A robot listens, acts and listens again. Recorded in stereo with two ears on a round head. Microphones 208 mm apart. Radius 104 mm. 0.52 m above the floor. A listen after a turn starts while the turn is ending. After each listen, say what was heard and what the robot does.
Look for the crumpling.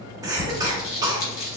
The crumpling: about 60° left or 120° left. Turn 60° left.
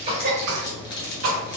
So it is at 50° left. Turn 50° left.
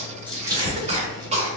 The crumpling is now 20° right. Turn 20° right.
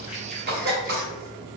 Keep listening.
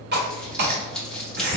Found it: crumpling, straight ahead.